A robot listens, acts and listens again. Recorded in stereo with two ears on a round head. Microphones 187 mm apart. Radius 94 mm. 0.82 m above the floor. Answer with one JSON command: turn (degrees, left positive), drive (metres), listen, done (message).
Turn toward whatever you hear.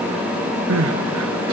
{"turn": -70}
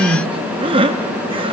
{"turn": -25}
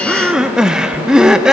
{"done": "Found it: crying, straight ahead."}